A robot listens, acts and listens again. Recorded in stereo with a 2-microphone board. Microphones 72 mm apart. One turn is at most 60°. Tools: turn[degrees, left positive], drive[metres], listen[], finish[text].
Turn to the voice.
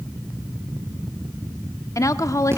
Thought: The woman speaking: about 50° left or 130° left.
Action: turn[50]
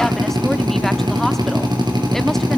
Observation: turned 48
Action: listen[]
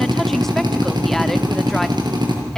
Action: listen[]
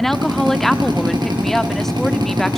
Action: finish[Facing the woman speaking.]